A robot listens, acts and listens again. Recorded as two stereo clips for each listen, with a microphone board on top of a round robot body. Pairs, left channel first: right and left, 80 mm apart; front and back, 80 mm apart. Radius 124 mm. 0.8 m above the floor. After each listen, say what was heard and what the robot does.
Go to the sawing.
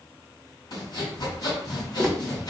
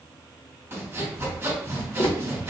The sawing: 125° right. Turn 125° right.
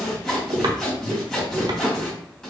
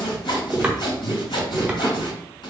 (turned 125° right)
The sawing is now 10° right. Turn 10° right.
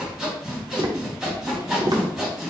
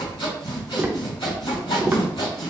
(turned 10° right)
Drive 1.0 m forward.
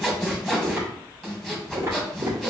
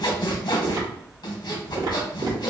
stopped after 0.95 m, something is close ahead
Arrived at the sawing, straight ahead.